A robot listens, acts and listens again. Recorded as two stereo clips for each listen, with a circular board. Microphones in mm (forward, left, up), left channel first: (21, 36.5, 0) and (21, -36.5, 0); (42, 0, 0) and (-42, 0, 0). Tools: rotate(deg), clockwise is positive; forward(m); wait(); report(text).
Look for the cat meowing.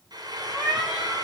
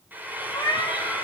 rotate(10)
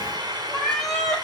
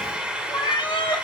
rotate(-10)
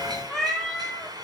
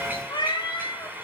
rotate(-10)
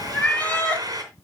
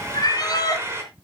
rotate(-25)
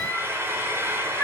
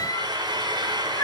rotate(-40)
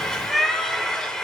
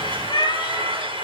report("Found it: a cat meowing, straight ahead.")